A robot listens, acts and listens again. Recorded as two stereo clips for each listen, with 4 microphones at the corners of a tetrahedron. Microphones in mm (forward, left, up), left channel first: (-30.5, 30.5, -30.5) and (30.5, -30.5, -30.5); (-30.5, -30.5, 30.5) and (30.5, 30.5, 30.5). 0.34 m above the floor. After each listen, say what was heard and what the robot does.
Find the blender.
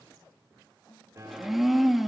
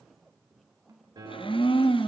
The blender: 130° right. Turn 130° right.
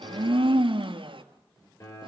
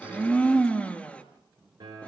The blender is now 60° right. Turn 60° right.
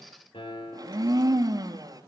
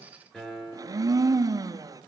Facing the blender.